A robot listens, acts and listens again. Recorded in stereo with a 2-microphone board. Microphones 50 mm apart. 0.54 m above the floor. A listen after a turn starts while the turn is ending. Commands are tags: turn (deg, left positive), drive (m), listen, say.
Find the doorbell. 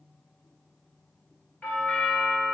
<turn deg="35"/>
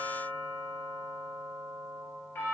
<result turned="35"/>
<turn deg="100"/>
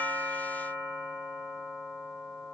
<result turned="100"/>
<turn deg="-20"/>
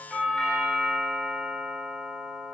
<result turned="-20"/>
<say>Facing the doorbell.</say>